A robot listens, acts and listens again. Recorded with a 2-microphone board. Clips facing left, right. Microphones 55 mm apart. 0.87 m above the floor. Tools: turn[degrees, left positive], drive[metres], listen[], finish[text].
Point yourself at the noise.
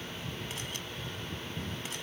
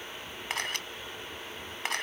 Action: turn[-90]
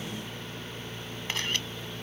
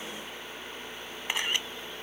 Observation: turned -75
Thought: So it is at 15° right.
Action: turn[-15]
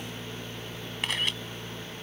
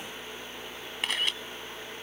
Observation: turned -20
Action: finish[Facing the camera shutter.]